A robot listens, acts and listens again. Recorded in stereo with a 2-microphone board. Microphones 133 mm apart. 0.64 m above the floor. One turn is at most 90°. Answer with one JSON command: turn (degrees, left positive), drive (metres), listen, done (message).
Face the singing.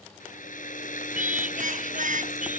{"turn": -90}
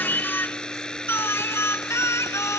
{"turn": 20}
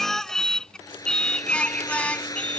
{"turn": 10}
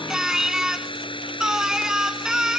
{"done": "Facing the singing."}